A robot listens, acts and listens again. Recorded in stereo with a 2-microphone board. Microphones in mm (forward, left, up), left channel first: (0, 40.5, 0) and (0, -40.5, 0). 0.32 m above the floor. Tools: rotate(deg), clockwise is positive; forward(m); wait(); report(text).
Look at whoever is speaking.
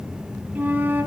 wait()
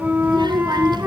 rotate(65)
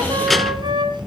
report("Facing the child speaking.")